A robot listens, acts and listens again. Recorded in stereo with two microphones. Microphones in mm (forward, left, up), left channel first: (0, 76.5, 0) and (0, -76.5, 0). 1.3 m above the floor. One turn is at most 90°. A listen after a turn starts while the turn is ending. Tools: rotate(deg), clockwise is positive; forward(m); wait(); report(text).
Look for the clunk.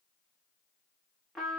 wait()
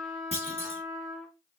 rotate(45)
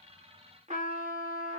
wait()
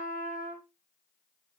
report("I heard a clunk, but can't make it out now. It was about straight ahead or 90° right.")